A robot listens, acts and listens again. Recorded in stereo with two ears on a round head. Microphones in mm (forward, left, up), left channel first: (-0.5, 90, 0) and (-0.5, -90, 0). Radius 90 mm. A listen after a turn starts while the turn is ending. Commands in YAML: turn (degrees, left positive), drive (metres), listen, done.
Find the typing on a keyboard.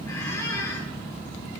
listen: true
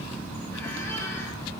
listen: true
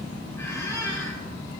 done: "I can't make out typing on a keyboard, only a squeak."